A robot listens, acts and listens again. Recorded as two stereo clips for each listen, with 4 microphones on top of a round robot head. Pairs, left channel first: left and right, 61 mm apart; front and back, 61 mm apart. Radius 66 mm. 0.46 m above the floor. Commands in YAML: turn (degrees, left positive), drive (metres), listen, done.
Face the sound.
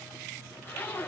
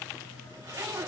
turn: 140
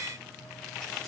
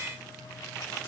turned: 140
listen: true
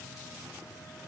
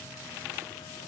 listen: true
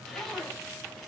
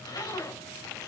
done: "Found it: a zipper, straight ahead, over 4 m away."